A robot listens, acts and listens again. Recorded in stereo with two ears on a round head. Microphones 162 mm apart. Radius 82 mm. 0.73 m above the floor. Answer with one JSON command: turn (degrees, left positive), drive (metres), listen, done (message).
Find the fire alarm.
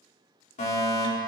{"turn": 45}
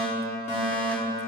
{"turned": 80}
{"turn": 45}
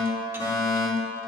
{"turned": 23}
{"turn": 25}
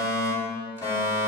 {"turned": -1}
{"turn": 25}
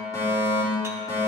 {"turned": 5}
{"turn": 20}
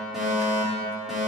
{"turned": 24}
{"done": "Found it: a fire alarm, straight ahead, 2 to 4 m away."}